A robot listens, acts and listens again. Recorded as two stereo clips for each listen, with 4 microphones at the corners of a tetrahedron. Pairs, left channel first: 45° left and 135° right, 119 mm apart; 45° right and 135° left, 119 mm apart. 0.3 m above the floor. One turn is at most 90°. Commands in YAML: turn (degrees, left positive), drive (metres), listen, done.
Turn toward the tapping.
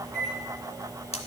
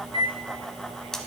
listen: true
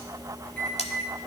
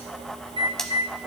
listen: true
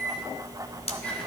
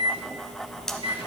done: "I can't make out tapping, only cutlery clinking and a microwave."